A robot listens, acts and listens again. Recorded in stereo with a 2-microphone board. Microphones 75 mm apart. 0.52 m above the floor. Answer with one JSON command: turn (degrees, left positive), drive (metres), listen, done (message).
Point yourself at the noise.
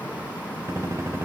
{"turn": -40}
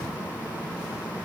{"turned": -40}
{"listen": true}
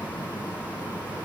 {"done": "I heard a gunshot, but can't make it out now. It was about straight ahead or 100° right."}